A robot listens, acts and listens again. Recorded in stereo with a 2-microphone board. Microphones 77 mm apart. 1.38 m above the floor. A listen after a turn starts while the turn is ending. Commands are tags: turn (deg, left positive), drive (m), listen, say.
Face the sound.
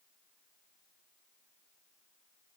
<listen/>
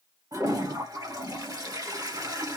<turn deg="-50"/>
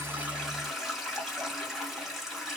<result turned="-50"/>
<say>Facing the toilet flushing, 1 to 2 m away.</say>